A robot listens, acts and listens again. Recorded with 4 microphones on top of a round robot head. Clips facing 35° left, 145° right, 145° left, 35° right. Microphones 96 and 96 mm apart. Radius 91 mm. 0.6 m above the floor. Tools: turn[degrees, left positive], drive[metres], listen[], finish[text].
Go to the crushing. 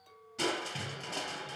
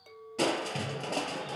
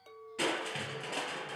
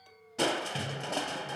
Thought: The crushing: 100° right.
Action: turn[-100]
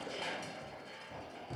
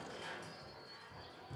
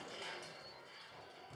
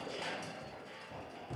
Action: drive[1.0]
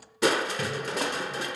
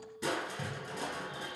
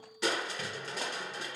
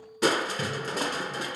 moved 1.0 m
Thought: The crushing is now 10° left.
Action: turn[10]
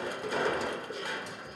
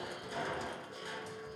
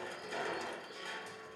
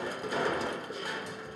Action: drive[1.0]
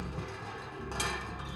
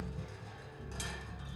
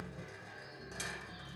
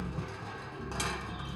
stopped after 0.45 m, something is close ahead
Action: finish[Arrived at the crushing, straight ahead.]